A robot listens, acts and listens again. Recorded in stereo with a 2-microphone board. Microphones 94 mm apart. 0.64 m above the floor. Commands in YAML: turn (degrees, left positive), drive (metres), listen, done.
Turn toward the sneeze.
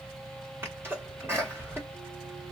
turn: -25
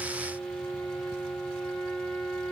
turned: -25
listen: true
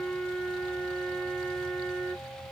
done: "I heard a sneeze, but can't make it out now. It was about straight ahead or 130° right."